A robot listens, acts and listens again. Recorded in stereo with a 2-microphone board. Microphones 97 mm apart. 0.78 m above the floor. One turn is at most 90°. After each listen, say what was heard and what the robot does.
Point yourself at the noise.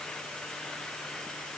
Keep listening.
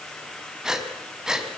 Turn 30° right.
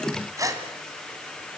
So it is at 145° right. Turn 90° right.
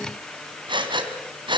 The breathing is now 55° right. Turn 55° right.
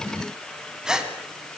Found it: breathing, straight ahead, 2 to 4 m away.